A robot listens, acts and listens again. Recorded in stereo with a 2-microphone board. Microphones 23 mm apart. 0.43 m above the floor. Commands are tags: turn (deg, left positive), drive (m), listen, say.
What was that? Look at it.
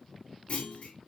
<turn deg="60"/>
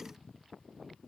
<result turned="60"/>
<listen/>
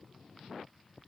<say>I heard a clunk, but can't make it out now. It was about straight ahead or 60° left.</say>